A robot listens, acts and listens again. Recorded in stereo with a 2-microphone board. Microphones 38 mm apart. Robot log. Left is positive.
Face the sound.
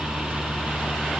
cmd idle
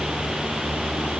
cmd idle
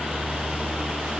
end: I can't make out anything to turn to.